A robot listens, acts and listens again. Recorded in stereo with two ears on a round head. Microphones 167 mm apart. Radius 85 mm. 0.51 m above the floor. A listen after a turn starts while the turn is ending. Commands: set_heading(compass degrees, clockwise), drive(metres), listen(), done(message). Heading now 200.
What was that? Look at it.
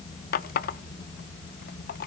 set_heading(150)
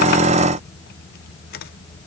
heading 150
listen()
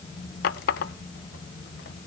set_heading(85)
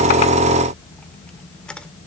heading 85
done("Found it: a running tap, straight ahead.")